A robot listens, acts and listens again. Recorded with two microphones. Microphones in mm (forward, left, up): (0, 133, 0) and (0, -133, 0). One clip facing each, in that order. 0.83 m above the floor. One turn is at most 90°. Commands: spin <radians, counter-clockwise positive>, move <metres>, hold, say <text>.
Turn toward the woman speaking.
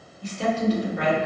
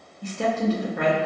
spin -0.96
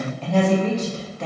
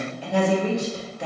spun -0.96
spin -0.26
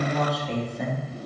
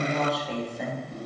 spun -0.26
say Facing the woman speaking.